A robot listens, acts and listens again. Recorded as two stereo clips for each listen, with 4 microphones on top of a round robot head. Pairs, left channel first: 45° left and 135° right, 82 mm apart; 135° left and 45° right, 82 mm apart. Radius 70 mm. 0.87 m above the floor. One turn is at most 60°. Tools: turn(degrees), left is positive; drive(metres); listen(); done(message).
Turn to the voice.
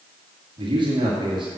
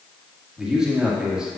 turn(degrees=-60)
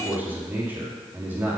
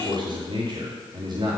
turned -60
turn(degrees=-60)
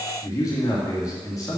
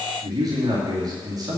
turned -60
done("Found it: a man speaking, straight ahead, 2 to 4 m away.")